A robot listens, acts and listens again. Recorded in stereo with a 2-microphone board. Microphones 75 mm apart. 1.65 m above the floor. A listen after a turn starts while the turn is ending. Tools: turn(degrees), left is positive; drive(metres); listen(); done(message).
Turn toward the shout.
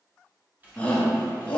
turn(degrees=15)
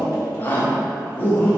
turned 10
turn(degrees=155)
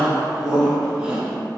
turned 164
turn(degrees=-10)
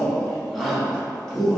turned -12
done("Facing the shout.")